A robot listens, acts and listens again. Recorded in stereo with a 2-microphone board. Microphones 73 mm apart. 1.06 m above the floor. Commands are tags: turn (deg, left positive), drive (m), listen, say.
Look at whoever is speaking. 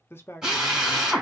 <turn deg="30"/>
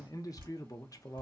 <turn deg="120"/>
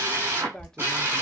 <turn deg="10"/>
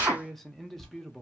<say>Found it: a man speaking, straight ahead.</say>